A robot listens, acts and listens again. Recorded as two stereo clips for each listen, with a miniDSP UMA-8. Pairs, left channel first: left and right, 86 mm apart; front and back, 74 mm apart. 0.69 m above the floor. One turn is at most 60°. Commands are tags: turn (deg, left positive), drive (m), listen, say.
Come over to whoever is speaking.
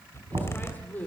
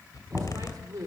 <turn deg="60"/>
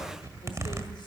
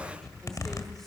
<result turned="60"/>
<turn deg="60"/>
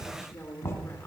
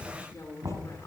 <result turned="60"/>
<turn deg="30"/>
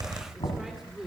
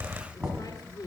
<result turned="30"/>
<drive m="1.0"/>
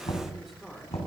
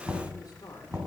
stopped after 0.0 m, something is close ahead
<say>Blocked. The woman speaking is further on, straight ahead.</say>